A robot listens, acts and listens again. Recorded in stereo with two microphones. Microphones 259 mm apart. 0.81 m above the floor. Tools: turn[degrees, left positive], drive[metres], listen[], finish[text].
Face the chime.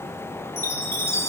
Action: turn[30]
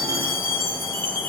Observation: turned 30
Thought: So it is at 140° left.
Action: turn[140]
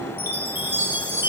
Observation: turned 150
Thought: The chime is now 10° right.
Action: turn[-10]
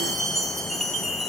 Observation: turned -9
Action: finish[Found it: a chime, straight ahead, 1 to 2 m away.]